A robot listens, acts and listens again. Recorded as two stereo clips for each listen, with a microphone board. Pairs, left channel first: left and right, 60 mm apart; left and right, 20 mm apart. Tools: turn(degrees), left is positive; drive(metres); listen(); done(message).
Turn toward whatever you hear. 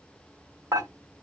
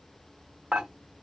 turn(degrees=-90)
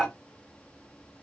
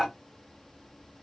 turn(degrees=10)
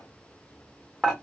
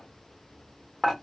done("Facing the dishes clattering.")